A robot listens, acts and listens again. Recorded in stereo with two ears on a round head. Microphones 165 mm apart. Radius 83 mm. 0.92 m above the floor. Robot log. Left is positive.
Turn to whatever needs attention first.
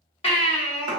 note: The baby crying: about 30° left or 150° left.
cmd yaw +30
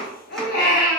note: So it is at 120° left.
cmd yaw +120
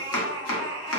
note: The baby crying is now 25° left.
cmd yaw +25
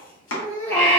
note: The baby crying is now 15° left.
cmd yaw +15
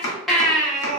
end: Found it: a baby crying, straight ahead.